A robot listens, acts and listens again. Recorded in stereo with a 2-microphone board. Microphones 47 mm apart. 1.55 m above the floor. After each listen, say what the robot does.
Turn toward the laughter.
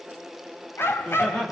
Turn 30° left.
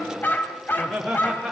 Facing the laughter.